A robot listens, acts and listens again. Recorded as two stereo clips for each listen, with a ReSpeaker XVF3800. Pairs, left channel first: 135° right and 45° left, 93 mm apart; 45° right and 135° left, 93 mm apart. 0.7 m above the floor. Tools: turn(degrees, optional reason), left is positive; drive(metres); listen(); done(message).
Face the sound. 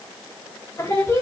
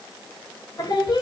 turn(degrees=-80, reason="The singing: 80° right.")
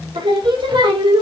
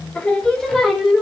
turn(degrees=50, reason="The singing is now 50° left.")
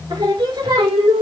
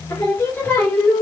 turn(degrees=30, reason="The singing is now 30° left.")
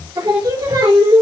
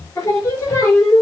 turn(degrees=20, reason="The singing is now 20° left.")
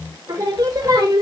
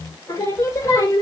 turn(degrees=10, reason="The singing is now 10° left.")
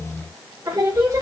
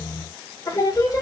done("Facing the singing, 2 to 4 m away.")